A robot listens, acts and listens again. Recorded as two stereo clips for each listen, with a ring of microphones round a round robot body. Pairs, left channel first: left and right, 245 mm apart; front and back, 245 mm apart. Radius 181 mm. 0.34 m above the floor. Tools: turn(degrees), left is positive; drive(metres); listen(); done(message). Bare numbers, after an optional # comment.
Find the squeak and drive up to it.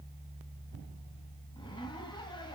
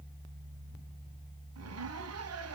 listen()
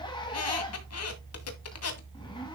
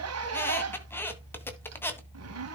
# The squeak: 80° left.
turn(80)
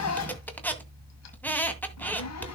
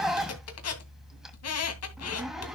drive(1.0)
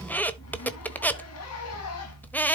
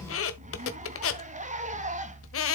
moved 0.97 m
drive(1.0)
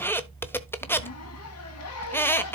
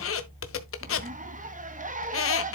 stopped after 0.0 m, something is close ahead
# The squeak is now 10° left.
turn(10)
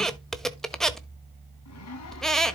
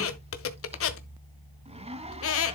done("I am next to the squeak.")